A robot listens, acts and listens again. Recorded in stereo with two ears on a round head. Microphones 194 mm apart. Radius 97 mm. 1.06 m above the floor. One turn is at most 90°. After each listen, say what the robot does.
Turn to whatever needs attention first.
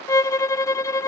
Keep listening.
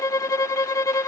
Keep listening.
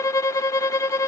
I can't make out anything urgent to turn to.